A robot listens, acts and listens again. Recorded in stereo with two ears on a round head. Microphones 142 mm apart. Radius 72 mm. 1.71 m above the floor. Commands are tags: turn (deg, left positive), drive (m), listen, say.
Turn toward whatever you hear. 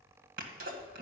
<turn deg="-60"/>
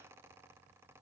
<listen/>
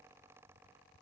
<say>I heard a sneeze, but can't make it out now. It was about straight ahead or 60° right.</say>